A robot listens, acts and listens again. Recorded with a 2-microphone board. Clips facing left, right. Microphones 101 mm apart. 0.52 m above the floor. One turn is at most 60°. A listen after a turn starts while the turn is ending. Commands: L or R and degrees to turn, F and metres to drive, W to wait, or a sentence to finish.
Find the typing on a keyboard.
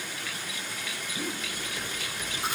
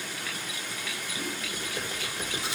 R35
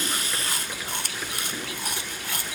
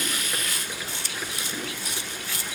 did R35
Found it: typing on a keyboard, straight ahead, 2 to 4 m away.